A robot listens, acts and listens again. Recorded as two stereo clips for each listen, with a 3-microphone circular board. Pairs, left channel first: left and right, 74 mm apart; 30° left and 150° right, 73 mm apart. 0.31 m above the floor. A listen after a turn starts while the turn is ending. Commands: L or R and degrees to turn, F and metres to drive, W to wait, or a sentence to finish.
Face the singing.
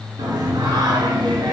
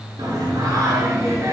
R100
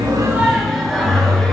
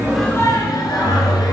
L10
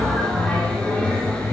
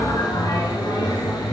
L20
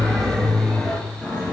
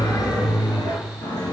L10
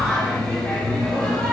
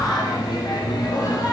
L10
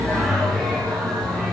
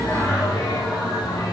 Found it: singing, straight ahead, 2 to 4 m away.